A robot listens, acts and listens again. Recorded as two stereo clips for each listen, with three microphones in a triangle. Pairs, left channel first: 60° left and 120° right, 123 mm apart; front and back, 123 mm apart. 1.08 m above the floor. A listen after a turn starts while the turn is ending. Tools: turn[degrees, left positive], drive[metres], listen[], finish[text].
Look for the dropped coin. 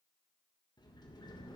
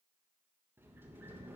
Action: listen[]
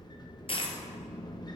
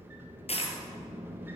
Thought: The dropped coin: 25° left.
Action: turn[25]
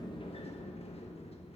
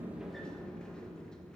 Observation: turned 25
Action: finish[Facing where the dropped coin came from. I can't hear it now.]